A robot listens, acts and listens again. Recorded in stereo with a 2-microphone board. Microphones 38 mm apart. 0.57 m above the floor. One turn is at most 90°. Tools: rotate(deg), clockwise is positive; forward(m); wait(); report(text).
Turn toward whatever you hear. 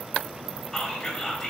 rotate(-30)
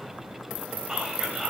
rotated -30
rotate(15)
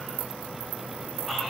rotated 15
wait()
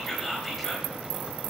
report("Facing the whispering.")